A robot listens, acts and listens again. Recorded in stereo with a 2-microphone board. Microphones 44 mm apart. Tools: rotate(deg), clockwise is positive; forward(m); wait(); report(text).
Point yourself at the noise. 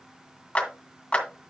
rotate(-30)
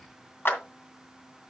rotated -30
rotate(-115)
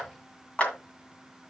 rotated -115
rotate(-35)
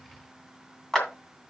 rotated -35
rotate(-10)
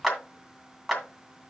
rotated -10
report("Found it: a clap, straight ahead, 2 to 4 m away.")